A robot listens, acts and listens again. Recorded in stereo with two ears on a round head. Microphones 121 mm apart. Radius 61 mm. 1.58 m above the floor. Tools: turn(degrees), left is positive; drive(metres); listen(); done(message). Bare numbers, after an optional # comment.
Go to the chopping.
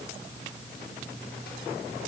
listen()
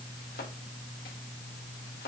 # The chopping: about 75° left or 105° left.
turn(75)
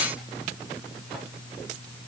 listen()
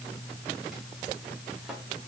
listen()
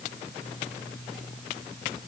done("I heard chopping, but can't make it out now. It was about straight ahead or 30° left. I did not reach it.")